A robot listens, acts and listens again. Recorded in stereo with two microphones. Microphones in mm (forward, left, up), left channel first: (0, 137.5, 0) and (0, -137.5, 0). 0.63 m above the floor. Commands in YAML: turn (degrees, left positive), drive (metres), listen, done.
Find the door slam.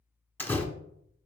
turn: 30
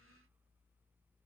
listen: true
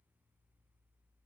done: "I heard a door slam, but can't make it out now. It was about 25° right or 145° left."